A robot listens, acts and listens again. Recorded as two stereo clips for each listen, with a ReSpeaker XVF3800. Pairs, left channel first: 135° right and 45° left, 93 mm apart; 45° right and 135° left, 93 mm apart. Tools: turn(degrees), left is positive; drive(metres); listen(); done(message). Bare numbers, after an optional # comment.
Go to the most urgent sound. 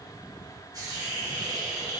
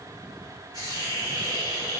listen()
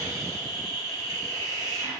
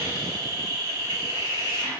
listen()
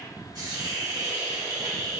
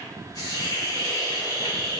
done("I can't make out anything urgent, only a hiss.")